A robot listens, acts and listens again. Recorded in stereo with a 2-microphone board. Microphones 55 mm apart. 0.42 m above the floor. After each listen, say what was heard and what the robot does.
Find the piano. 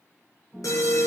The piano: about 30° right or 150° right. Turn 30° right.
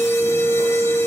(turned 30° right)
Keep listening.
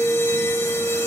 Keep listening.
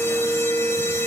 I heard a piano, but can't make it out now. It was about straight ahead or 120° right.